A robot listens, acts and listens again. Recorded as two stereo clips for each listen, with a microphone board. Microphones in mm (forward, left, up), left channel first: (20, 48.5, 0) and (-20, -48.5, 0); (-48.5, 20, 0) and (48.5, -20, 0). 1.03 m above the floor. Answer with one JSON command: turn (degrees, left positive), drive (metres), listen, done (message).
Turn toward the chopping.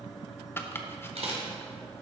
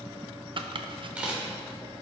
{"done": "Facing the chopping, under 1 m away."}